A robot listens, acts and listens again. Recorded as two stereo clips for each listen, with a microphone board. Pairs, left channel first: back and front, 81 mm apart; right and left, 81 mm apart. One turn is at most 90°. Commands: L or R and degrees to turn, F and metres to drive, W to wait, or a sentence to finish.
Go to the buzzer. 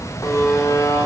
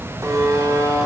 L90
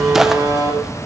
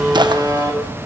L50
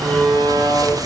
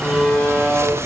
F1.0
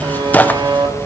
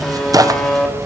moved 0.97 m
F1.0
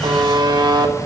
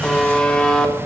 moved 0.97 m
R10
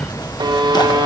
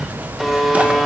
F1.0
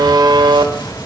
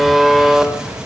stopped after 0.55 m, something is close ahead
Arrived at the buzzer, straight ahead.